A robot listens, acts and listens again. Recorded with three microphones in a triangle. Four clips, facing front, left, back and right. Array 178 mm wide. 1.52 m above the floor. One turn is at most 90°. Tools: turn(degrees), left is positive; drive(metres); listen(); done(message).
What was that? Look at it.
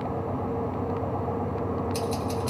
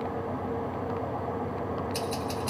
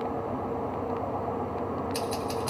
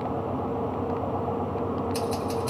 turn(degrees=90)
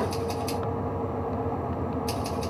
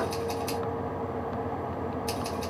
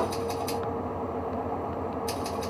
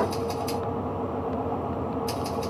turn(degrees=70)
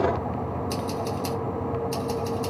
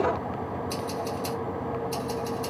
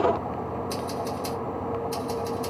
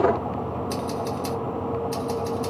turn(degrees=-10)
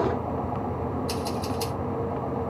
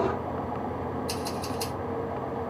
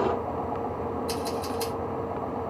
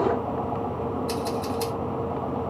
done("Found it: scissors, straight ahead.")